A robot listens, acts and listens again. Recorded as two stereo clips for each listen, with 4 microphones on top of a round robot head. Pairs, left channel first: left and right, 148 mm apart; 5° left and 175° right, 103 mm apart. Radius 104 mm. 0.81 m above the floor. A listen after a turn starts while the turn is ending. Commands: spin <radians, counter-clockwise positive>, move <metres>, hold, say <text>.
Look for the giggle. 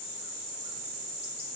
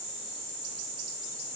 hold
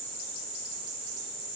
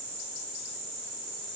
hold
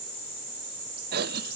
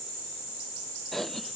spin -1.48
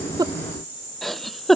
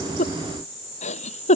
say Found it: a giggle, straight ahead.